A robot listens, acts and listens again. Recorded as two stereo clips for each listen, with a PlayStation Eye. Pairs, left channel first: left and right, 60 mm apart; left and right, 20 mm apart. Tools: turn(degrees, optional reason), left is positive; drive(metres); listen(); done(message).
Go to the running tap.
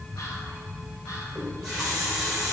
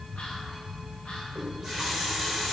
turn(degrees=-30)
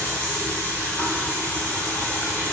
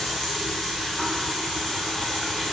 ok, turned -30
turn(degrees=25, reason="So it is at 25° left.")
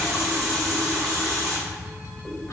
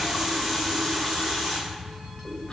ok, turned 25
turn(degrees=-15, reason="The running tap is now 15° right.")
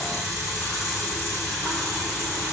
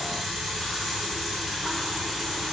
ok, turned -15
drive(metres=1.0)
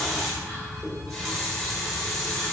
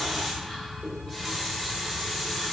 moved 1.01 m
drive(metres=1.0)
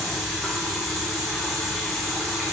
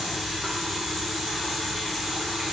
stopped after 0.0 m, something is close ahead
done("I am next to the running tap.")